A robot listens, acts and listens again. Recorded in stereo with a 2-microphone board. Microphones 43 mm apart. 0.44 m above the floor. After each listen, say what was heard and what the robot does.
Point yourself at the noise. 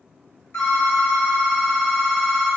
The phone ringing: about 65° left or 115° left. Turn 65° left.
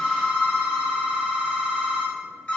So it is at 40° left. Turn 40° left.
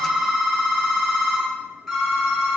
Facing the phone ringing.